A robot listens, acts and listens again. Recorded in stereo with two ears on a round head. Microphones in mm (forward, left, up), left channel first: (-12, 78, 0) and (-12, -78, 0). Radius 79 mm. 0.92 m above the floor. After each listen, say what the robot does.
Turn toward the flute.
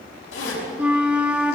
Turn 30° right.
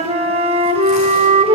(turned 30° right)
Turn 140° right.
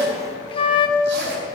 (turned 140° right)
Turn 35° left.
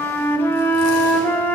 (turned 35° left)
Turn 10° left.
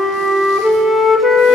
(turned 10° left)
Found it: a flute, straight ahead.